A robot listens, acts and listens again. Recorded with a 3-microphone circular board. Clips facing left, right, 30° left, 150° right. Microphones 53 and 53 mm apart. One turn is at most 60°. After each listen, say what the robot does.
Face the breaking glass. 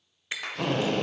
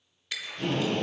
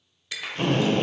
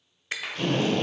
Turn 60° left.
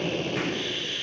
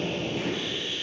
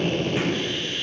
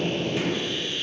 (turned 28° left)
Turn 60° left.
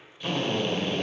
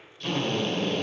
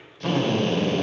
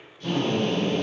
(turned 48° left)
Turn 60° left.
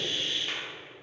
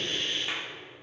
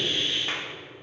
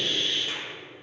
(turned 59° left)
Turn 25° left.
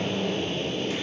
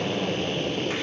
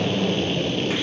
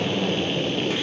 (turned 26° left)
I heard breaking glass from this way, but can't make it out now.